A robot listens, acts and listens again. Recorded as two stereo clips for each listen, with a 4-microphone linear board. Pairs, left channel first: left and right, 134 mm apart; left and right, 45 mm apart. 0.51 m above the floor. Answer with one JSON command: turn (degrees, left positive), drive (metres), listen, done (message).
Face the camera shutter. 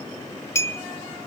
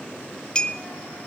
{"listen": true}
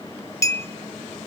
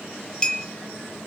{"listen": true}
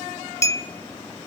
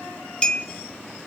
{"done": "I can't make out a camera shutter to turn to."}